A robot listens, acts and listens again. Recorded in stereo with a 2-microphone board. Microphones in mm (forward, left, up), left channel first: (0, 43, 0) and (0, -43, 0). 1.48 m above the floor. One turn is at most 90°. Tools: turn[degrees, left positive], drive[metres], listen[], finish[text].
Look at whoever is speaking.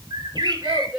Action: turn[-30]
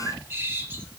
Action: listen[]
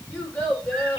Thought: So it is at 20° left.
Action: turn[20]
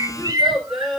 Action: finish[Found it: a child speaking, straight ahead.]